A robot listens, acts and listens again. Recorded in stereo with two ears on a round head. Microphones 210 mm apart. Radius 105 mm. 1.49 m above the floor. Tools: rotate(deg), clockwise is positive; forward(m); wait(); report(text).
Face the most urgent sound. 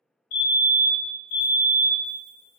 rotate(-60)
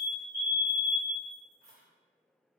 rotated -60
rotate(-25)
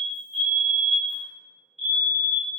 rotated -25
report("Found it: a fire alarm, straight ahead, 1 to 2 m away.")